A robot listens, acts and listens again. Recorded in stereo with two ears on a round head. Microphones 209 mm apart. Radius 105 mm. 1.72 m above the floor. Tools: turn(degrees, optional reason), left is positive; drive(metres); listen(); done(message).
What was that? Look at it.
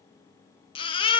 turn(degrees=20, reason="The baby crying: about 20° left or 160° left.")
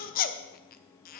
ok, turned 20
turn(degrees=135, reason="So it is at 135° left.")
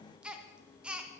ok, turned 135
done("Found it: a baby crying, straight ahead, 1 to 2 m away.")